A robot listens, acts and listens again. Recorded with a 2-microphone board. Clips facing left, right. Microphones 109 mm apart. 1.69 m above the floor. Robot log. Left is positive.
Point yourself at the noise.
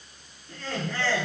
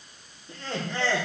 note: The laughter: about 25° right or 155° right.
cmd yaw -25
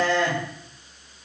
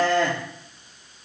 note: So it is at 125° right.
cmd yaw -125
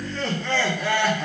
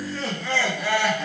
end: Found it: laughter, straight ahead.